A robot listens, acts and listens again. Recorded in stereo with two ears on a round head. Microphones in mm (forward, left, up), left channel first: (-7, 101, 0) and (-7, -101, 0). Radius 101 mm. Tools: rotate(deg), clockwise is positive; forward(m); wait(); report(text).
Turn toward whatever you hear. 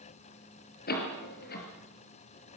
rotate(-45)
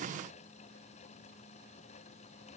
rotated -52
wait()
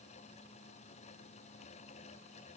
report("I heard a door slam, but can't make it out now. It was about 5° right or 85° left.")